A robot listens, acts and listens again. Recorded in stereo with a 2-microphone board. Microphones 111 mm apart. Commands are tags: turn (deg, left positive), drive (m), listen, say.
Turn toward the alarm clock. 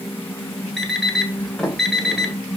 <turn deg="-30"/>
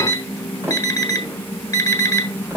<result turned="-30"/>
<turn deg="30"/>
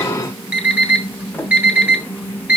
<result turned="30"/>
<turn deg="-15"/>
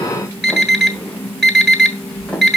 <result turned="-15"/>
<say>Found it: an alarm clock, straight ahead, 1 to 2 m away.</say>